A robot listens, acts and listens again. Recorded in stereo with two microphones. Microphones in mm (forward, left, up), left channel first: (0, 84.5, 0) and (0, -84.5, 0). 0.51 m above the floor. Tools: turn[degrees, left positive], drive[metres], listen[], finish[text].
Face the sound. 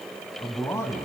Action: turn[30]
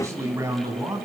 Thought: So it is at 20° right.
Action: turn[-20]
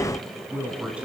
Thought: The man speaking is now 10° right.
Action: turn[-10]
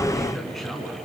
Action: finish[Facing the man speaking, over 4 m away.]